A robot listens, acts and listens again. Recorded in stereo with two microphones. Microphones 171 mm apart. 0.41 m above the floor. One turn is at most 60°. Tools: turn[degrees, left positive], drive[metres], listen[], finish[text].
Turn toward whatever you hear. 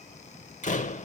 Thought: The door slam: about 45° left or 135° left.
Action: turn[45]
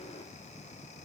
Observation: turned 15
Action: listen[]
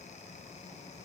Action: finish[I heard a door slam, but can't make it out now. It was about 30° left or 120° left.]